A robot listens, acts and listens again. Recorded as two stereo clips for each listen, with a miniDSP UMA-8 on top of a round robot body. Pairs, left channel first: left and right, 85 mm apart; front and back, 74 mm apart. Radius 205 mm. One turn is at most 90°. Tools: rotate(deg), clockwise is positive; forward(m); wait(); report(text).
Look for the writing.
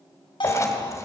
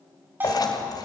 rotate(-35)
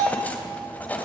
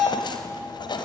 rotate(-20)
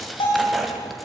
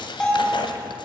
report("Found it: writing, straight ahead, 2 to 4 m away.")